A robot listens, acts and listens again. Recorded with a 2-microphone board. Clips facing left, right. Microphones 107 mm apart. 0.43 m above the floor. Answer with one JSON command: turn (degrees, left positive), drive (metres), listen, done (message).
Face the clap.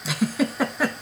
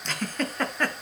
{"listen": true}
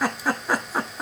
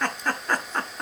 {"listen": true}
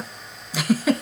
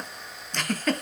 {"done": "I can't make out a clap to turn to."}